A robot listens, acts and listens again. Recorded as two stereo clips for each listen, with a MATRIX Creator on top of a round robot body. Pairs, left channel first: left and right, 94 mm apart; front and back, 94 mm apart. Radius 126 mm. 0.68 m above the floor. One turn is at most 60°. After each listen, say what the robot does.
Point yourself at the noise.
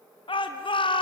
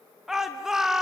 Turn 60° left.
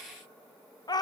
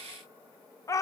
Turn 50° left.
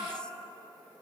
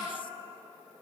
Keep listening.
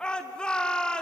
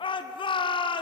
Turn 10° left.
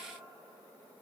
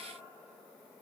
Keep listening.
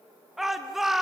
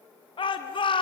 Facing the shout, 1 to 2 m away.